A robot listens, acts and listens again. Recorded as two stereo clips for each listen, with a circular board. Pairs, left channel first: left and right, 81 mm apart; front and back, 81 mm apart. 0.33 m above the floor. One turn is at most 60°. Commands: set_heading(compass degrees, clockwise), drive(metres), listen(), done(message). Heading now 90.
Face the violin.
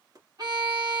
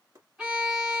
set_heading(150)
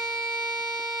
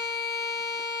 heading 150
set_heading(185)
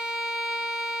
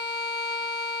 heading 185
done("Found it: a violin, straight ahead.")